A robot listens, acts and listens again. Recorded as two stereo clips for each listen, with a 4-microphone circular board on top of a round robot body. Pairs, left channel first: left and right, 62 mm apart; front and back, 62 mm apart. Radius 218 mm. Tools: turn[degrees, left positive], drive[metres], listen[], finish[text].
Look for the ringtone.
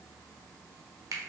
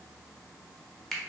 Action: listen[]
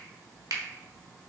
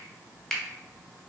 Action: listen[]
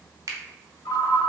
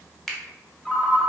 Thought: The ringtone: 85° left.
Action: turn[85]
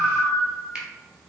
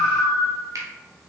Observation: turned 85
Thought: The ringtone is now 10° left.
Action: turn[10]
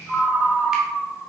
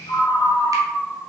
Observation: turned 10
Action: finish[Facing the ringtone.]